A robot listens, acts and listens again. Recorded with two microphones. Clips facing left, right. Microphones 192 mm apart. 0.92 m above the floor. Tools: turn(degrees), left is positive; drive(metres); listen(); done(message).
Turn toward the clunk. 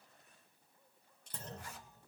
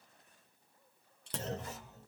turn(degrees=-70)
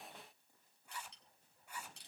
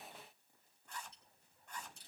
listen()
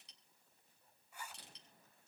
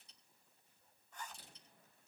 done("I heard a clunk, but can't make it out now. It was about straight ahead or 40° right.")